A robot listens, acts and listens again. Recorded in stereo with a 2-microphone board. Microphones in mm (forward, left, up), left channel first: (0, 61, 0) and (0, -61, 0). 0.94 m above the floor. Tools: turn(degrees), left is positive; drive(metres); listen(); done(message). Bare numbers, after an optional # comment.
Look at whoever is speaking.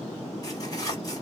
listen()
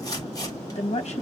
# The woman speaking: about 60° left or 120° left.
turn(60)
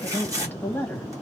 # So it is at 15° left.
turn(15)
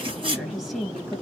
done("Facing the woman speaking, 1 to 2 m away.")